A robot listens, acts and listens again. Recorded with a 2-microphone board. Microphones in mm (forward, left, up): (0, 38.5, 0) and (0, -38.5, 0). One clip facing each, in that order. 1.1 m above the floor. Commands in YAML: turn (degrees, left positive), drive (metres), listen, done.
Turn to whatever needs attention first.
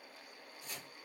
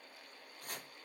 listen: true
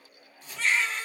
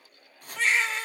turn: -90
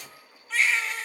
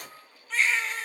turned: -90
done: "Found it: a baby crying, straight ahead."